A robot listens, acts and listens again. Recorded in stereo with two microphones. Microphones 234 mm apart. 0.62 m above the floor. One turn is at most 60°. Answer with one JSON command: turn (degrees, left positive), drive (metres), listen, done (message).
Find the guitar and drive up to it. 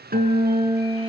{"turn": -40}
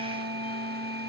{"turn": -60}
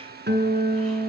{"turn": -45}
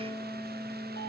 {"drive": 1.0}
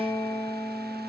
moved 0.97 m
{"turn": 10}
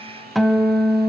{"drive": 1.0}
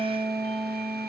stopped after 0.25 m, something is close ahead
{"done": "I am next to the guitar."}